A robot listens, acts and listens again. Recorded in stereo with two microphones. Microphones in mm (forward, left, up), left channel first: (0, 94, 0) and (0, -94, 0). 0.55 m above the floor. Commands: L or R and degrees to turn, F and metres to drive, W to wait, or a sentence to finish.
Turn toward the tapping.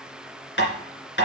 L75
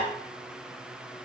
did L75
W
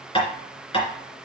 L30
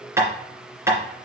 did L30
R15
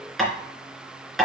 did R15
Facing the tapping, 2 to 4 m away.